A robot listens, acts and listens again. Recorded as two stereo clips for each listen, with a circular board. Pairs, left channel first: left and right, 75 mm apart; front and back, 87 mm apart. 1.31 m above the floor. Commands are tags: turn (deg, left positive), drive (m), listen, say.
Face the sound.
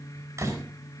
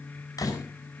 <turn deg="-45"/>
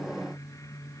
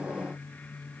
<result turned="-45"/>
<say>I heard a door slam from this way, but can't make it out now.</say>